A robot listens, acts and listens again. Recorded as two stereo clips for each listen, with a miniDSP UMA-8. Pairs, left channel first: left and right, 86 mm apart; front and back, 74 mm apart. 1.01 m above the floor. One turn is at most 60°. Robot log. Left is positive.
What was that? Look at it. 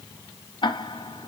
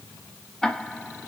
note: The ticking: 80° left.
cmd yaw +60
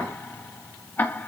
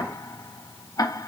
note: The ticking is now 25° left.
cmd yaw +25
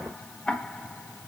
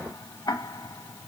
note: The ticking is now 15° left.
cmd yaw +15
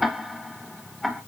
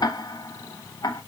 end: Found it: ticking, straight ahead, under 1 m away.